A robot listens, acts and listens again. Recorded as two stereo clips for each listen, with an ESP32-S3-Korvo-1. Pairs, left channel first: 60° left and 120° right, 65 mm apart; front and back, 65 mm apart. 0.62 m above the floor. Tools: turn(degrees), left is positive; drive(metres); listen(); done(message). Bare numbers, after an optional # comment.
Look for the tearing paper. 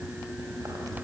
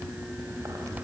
listen()
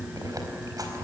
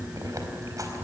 listen()
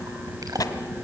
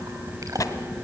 # The tearing paper: 35° left.
turn(35)
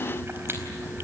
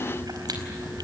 listen()
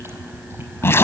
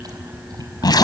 done("Found it: tearing paper, straight ahead, 1 to 2 m away.")